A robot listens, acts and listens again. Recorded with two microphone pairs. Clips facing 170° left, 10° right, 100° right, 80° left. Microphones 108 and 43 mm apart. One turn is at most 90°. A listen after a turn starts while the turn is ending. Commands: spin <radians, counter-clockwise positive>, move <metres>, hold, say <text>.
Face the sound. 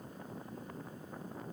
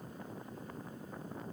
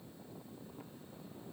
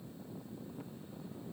hold
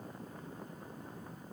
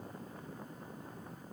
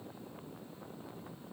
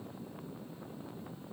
hold
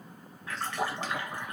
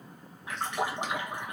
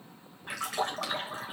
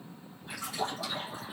spin -1.40
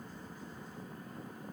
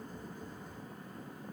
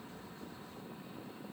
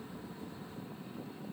say I heard a splash from this way, but can't make it out now.